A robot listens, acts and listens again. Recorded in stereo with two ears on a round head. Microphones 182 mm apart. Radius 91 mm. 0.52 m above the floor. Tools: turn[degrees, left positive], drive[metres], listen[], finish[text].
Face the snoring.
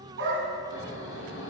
Thought: The snoring: about 70° left or 110° left.
Action: turn[70]
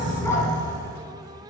Thought: So it is at 40° left.
Action: turn[40]
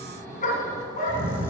Thought: The snoring is now 10° left.
Action: turn[10]
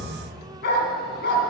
Action: finish[Found it: snoring, straight ahead.]